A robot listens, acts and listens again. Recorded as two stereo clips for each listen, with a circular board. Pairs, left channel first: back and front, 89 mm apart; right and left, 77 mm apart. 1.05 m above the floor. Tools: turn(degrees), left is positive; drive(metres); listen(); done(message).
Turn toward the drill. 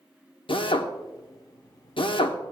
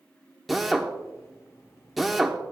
turn(degrees=180)
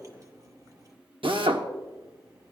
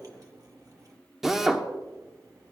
done("Facing the drill.")